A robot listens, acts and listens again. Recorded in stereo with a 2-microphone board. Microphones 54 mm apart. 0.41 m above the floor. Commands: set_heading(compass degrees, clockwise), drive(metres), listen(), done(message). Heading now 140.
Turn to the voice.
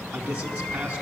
set_heading(160)
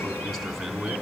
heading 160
done("Facing the man speaking.")